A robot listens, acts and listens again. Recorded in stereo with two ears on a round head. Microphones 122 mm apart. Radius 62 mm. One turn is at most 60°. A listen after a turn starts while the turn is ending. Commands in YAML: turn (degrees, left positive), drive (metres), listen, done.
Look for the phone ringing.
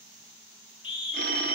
turn: -60
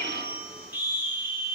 listen: true
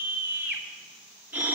listen: true
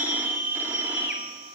turn: -15
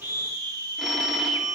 done: "Found it: a phone ringing, straight ahead."